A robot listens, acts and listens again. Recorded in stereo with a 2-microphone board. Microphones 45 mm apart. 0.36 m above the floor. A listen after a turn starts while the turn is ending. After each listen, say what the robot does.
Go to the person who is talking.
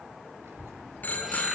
Turn 70° right.
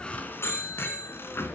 Keep listening.
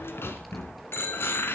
Keep listening.
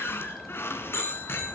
Drive 1.0 m forward.
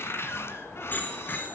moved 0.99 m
Keep listening.
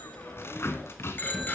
Keep listening.
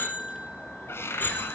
Facing where the child speaking came from. I can't hear it now. I did not reach it.